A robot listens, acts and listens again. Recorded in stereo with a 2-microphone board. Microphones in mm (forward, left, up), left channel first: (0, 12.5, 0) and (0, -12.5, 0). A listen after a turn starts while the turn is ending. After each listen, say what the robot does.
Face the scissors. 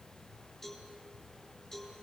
Keep listening.
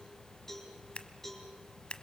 Turn 55° left.
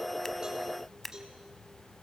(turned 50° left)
Turn 10° left.
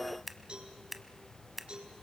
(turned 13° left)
Facing the scissors.